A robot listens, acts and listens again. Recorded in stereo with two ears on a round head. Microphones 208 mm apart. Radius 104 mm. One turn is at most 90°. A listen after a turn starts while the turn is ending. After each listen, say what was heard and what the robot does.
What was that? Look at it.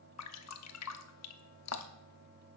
Turn 90° left.
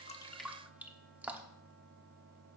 Facing the dripping.